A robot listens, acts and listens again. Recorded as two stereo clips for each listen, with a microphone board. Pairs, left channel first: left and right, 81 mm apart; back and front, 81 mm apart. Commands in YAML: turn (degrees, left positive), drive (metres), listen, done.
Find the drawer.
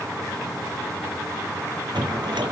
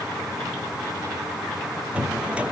turn: -75
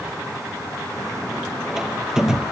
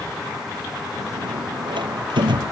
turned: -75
done: "Found it: a drawer, straight ahead."